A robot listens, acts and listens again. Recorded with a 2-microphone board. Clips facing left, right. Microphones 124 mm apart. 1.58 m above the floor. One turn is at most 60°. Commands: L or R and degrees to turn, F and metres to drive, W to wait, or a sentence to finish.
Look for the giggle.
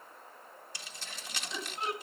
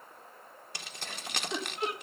R55
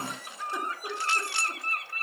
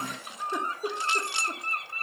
R60
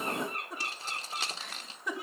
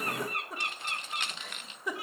Found it: a giggle, straight ahead.